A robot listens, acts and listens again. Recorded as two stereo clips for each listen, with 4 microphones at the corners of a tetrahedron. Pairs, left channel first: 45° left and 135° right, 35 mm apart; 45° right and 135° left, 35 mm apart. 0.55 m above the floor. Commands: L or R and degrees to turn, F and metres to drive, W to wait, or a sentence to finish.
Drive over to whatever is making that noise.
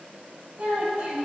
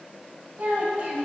R175
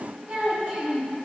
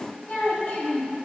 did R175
R75
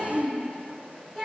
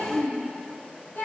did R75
R20
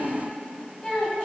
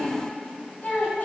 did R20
F1.0
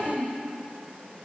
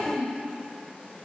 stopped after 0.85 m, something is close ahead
R10
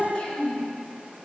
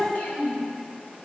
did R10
I am next to the child speaking.